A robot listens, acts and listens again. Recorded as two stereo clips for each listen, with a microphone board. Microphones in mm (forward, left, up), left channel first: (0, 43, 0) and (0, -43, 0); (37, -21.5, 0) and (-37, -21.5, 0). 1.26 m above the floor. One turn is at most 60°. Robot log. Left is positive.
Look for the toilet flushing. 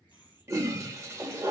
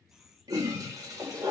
note: The toilet flushing: 145° right.
cmd yaw -60
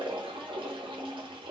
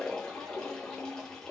note: The toilet flushing is now 80° right.
cmd yaw -60
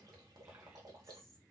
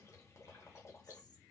note: Nothing new. It was at 20° right.
cmd yaw -20
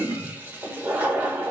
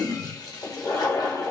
note: The toilet flushing is now 25° right.
cmd yaw -25
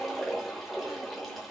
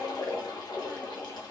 end: Facing the toilet flushing.